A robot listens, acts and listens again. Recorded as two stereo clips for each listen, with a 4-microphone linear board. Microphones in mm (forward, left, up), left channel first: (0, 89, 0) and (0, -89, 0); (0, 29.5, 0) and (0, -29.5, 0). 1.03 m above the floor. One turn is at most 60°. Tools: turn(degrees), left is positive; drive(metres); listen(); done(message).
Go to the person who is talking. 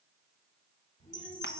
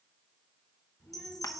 turn(degrees=40)
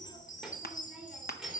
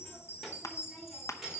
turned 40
drive(metres=1.0)
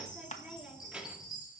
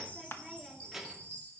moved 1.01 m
drive(metres=1.0)
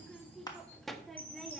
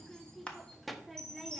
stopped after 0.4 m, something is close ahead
done("Arrived at the child speaking, straight ahead.")